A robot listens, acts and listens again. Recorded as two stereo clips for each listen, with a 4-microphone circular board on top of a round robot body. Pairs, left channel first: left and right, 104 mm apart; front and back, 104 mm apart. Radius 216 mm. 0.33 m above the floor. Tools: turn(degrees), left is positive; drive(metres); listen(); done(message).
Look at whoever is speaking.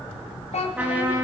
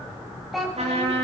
turn(degrees=90)
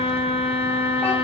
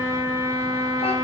listen()
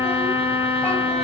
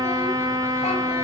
listen()
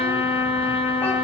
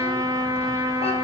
done("I heard a child speaking from this way, but can't make it out now.")